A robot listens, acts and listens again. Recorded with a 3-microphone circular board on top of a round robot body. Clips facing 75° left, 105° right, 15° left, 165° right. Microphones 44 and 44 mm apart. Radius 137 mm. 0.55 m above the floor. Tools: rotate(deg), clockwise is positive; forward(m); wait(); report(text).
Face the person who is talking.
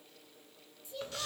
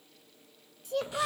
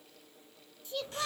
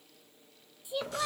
rotate(90)
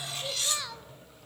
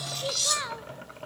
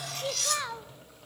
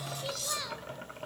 rotate(40)
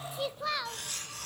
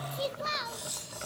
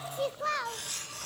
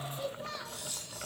rotate(10)
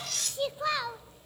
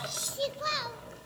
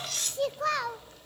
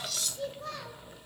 report("Facing the child speaking, 1 to 2 m away.")